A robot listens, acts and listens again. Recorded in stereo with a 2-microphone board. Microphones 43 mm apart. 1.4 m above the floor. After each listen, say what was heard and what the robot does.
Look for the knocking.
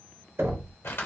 Turn 90° right.
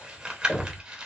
So it is at 15° right. Turn 15° right.
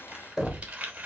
Facing the knocking, under 1 m away.